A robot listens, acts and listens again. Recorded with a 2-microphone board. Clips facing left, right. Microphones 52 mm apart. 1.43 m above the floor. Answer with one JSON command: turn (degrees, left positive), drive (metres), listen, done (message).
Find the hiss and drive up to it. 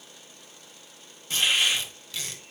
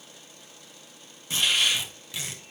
{"turn": 35}
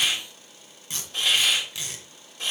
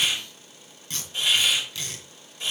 {"turn": 110}
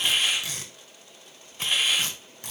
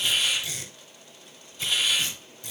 {"turn": 40}
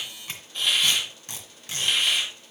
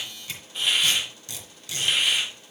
{"turn": -10}
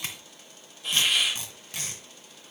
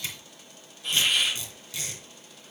{"drive": 1.0}
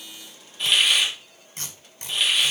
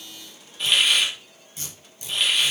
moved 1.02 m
{"drive": 1.0}
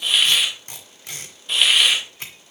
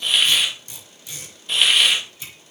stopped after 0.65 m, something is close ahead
{"done": "Arrived at the hiss, straight ahead."}